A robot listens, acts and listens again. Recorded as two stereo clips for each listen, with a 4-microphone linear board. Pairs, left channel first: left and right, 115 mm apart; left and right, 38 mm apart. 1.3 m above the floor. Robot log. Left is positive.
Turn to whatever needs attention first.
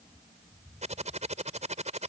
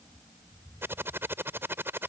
cmd idle
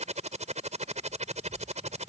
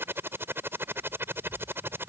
cmd idle
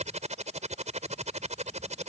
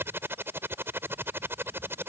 end: I can't make out anything urgent, only typing on a keyboard.